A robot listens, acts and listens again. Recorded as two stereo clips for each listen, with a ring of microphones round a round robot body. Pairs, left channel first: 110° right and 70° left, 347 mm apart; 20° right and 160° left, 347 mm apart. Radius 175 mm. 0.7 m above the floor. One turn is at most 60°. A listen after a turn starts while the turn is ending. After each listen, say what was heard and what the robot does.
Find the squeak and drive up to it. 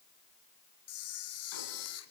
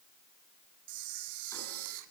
Keep listening.
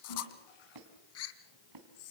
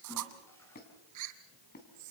The squeak: 40° left. Turn 40° left.
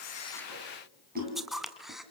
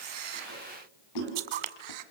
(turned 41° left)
Keep listening.
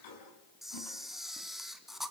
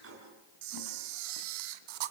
Keep listening.
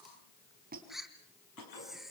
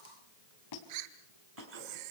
Drive 1.0 m forward.
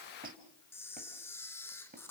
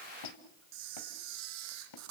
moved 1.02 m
Drive 1.0 m forward.
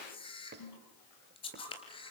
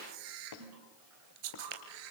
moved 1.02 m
Drive 1.0 m forward.
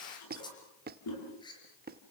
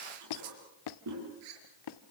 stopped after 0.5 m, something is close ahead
Arrived at the squeak, straight ahead.